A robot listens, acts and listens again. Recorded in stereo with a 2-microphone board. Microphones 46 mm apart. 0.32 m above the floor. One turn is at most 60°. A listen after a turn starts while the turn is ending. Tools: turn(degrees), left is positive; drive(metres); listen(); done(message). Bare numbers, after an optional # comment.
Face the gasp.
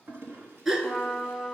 turn(-30)
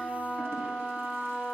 listen()
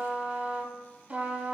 done("I heard a gasp, but can't make it out now. It was about 20° left or 140° right.")